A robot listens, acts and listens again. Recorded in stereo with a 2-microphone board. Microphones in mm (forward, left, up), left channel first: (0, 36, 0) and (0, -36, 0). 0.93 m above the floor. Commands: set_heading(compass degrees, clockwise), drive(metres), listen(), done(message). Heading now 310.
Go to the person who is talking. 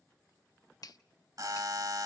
listen()
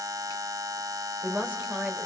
set_heading(330)
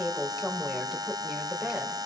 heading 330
drive(1.0)
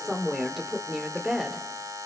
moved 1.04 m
drive(1.0)
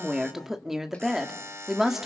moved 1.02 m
drive(1.0)
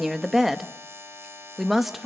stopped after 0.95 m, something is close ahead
done("Arrived at the woman speaking, straight ahead.")